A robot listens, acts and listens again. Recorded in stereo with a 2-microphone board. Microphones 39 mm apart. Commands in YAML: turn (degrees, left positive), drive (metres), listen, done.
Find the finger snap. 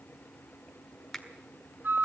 turn: 30
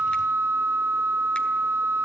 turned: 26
listen: true
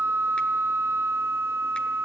listen: true
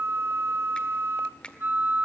turn: 150
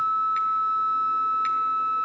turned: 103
turn: 45
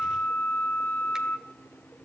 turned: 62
turn: -15
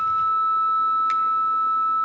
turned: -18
done: "I heard a finger snap from this way, but can't make it out now."